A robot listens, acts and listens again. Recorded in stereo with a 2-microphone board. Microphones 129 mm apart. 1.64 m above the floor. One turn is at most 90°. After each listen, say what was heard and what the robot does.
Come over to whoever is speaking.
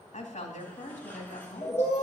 The woman speaking: about 65° left or 115° left. Turn 65° left.
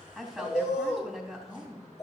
Drive 1.0 m forward.
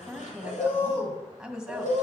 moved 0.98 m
Drive 1.0 m forward.
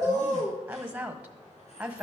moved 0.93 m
The woman speaking is now 10° right. Turn 10° right.
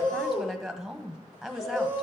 Drive 1.0 m forward.
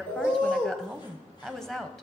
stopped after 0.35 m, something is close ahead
I am next to the woman speaking.